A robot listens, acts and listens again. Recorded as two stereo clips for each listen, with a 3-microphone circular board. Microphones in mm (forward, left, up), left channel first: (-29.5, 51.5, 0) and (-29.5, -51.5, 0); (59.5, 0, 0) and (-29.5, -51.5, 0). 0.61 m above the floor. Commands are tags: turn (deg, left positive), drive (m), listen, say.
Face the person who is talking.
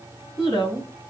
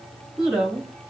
<turn deg="130"/>
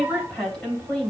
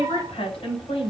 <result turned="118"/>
<turn deg="10"/>
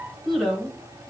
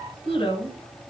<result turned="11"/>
<say>Found it: a woman speaking, straight ahead.</say>